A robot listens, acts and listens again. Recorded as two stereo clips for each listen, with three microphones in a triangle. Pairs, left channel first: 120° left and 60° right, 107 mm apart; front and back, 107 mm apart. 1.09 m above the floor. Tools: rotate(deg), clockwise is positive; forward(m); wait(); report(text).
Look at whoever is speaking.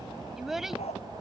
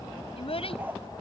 rotate(-25)
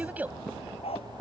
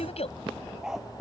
rotate(-15)
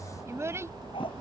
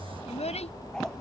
report("Found it: a child speaking, straight ahead.")